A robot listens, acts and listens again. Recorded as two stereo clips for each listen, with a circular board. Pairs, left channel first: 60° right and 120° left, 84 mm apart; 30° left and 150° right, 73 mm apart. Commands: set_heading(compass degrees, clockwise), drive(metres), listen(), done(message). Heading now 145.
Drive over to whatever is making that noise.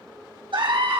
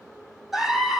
set_heading(20)
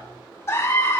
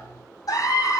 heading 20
drive(1.0)
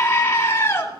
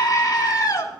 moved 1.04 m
drive(1.0)
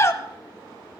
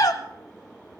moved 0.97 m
drive(1.0)
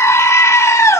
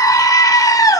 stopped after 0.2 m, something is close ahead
done("Arrived at the scream, straight ahead.")